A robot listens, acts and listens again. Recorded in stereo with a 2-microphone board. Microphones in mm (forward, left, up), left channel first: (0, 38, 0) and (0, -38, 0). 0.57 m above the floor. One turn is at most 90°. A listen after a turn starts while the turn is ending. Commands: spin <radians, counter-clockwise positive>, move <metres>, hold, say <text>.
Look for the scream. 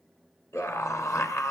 spin 0.70
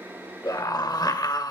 spin 1.57
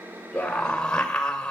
spin 0.26
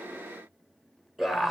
say Found it: a scream, straight ahead, 2 to 4 m away.